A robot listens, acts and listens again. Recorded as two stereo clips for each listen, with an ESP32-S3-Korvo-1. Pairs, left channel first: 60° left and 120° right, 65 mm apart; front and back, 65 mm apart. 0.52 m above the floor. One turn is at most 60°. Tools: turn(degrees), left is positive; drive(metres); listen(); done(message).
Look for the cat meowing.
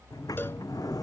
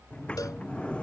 listen()
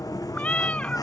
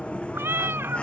turn(degrees=60)
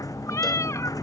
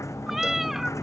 turn(degrees=60)
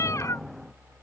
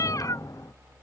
turn(degrees=25)
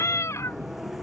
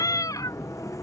turn(degrees=20)
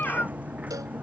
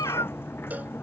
done("Found it: a cat meowing, straight ahead.")